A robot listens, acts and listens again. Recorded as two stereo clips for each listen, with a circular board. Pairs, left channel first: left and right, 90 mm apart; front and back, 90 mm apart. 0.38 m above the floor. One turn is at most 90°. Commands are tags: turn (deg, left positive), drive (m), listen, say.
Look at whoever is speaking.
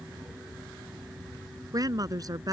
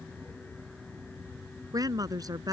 <turn deg="-90"/>
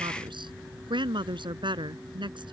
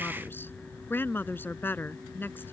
<turn deg="-65"/>
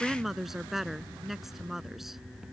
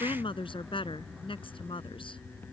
<say>Found it: a woman speaking, straight ahead.</say>